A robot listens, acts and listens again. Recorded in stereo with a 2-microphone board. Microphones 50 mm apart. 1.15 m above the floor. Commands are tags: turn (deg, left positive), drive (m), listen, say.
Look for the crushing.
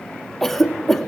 <listen/>
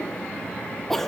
<listen/>
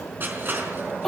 <turn deg="-45"/>
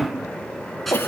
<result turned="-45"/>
<say>Facing the crushing, over 4 m away.</say>